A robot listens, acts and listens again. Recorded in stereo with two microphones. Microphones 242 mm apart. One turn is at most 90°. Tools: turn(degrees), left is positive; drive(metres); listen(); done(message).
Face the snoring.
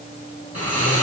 turn(degrees=90)
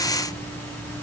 turn(degrees=10)
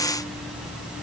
done("Facing the snoring.")